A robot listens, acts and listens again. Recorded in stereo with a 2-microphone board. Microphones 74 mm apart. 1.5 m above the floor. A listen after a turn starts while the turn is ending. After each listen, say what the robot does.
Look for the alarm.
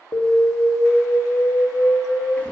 Turn 70° left.
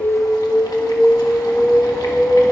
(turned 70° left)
Turn 15° left.
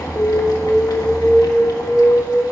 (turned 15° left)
Facing the alarm.